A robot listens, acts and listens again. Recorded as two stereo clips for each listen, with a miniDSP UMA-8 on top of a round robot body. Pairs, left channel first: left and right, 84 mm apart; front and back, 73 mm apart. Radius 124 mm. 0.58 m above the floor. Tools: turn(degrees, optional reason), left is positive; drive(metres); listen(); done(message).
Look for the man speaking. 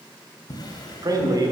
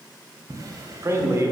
turn(degrees=-130, reason="The man speaking: 130° right.")
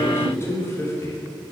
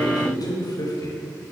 turn(degrees=35, reason="The man speaking is now 35° left.")
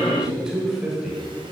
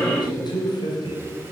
done("Found it: a man speaking, straight ahead.")